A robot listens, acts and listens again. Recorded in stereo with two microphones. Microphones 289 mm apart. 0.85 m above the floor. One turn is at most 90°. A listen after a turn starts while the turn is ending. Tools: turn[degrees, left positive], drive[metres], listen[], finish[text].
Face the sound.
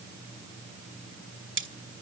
Thought: The cutlery clinking: about 40° right or 140° right.
Action: turn[-40]
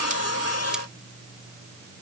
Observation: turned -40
Action: listen[]
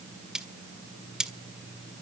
Action: finish[Found it: cutlery clinking, straight ahead.]